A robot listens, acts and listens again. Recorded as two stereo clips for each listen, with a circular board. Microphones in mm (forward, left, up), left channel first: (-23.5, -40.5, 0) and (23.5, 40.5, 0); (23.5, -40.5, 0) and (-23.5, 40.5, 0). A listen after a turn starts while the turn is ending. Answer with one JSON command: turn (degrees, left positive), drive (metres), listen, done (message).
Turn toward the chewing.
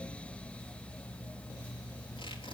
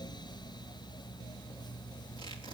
{"listen": true}
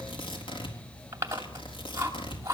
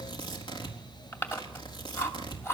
{"done": "Found it: chewing, straight ahead, 2 to 4 m away."}